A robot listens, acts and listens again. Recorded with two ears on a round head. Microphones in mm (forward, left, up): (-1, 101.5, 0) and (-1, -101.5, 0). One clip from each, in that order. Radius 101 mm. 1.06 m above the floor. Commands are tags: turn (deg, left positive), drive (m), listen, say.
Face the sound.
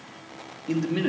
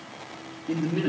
<turn deg="75"/>
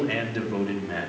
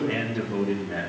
<turn deg="35"/>
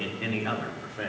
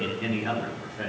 <turn deg="10"/>
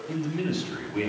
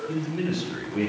<say>Facing the man speaking.</say>